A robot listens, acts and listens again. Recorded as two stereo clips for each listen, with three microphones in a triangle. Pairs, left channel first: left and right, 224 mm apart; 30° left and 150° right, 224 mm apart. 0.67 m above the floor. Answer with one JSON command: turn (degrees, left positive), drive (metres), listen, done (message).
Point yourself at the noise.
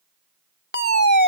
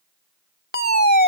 {"turn": 60}
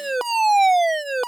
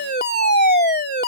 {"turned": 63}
{"done": "Facing the fire alarm."}